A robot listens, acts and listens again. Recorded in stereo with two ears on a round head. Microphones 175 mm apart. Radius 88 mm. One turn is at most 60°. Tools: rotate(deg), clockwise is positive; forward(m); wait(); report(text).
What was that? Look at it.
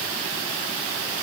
wait()
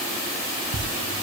rotate(60)
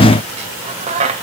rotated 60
rotate(35)
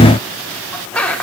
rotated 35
report("Found it: a squeak, straight ahead.")